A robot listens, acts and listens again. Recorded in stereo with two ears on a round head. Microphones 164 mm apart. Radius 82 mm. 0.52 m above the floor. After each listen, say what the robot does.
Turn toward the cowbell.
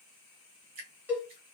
Turn 30° right.
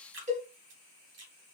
Turn 140° right.
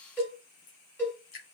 Turn 10° left.
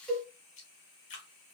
Facing the cowbell.